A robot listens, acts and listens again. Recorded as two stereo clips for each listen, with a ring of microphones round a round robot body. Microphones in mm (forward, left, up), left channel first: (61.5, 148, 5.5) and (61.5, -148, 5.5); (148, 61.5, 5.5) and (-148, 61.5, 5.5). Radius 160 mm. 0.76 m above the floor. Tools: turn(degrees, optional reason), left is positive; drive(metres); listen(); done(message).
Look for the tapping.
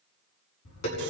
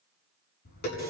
turn(degrees=60, reason="The tapping: 60° left.")
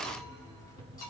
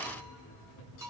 turn(degrees=10, reason="The tapping is now 10° left.")
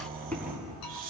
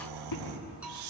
done("Facing the tapping, over 4 m away.")